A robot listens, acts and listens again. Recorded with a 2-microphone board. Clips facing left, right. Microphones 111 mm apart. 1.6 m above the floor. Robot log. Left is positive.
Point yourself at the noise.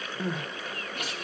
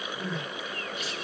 note: The crying: about 55° left or 125° left.
cmd yaw +55
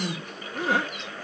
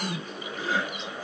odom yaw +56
note: So it is at 65° left.
cmd yaw +65
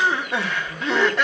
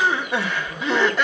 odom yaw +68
end: Found it: crying, straight ahead, 2 to 4 m away.